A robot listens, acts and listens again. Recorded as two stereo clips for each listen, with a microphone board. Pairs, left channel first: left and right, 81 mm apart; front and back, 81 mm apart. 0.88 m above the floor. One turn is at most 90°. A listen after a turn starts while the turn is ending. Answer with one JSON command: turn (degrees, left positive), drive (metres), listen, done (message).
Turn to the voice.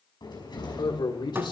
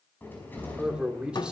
{"turn": 90}
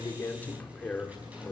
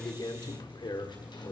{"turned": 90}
{"turn": 15}
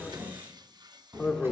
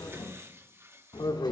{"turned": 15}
{"done": "Found it: a man speaking, straight ahead, 2 to 4 m away."}